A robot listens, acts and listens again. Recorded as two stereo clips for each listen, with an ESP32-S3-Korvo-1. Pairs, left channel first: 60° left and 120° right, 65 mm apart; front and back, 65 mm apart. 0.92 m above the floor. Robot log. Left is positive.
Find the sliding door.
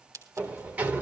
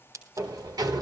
note: The sliding door: 175° left.
cmd yaw +175
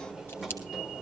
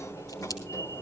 note: The sliding door is now 30° right.
cmd yaw -30
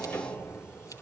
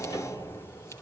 end: Found it: a sliding door, straight ahead, 1 to 2 m away.